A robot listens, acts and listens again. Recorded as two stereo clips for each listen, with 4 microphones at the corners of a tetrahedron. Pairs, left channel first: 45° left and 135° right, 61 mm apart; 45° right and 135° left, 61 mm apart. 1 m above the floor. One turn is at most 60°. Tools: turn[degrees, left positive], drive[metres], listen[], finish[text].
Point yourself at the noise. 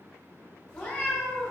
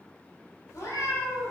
Thought: The cat meowing: 15° right.
Action: turn[-15]
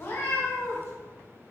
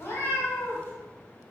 Action: finish[Found it: a cat meowing, straight ahead.]